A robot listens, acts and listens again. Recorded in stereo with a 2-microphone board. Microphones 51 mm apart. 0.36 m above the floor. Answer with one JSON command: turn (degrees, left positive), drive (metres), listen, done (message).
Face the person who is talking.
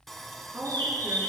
{"turn": -60}
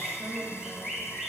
{"turn": -55}
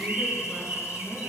{"listen": true}
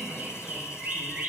{"listen": true}
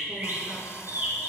{"done": "I heard a woman speaking from this way, but can't make it out now."}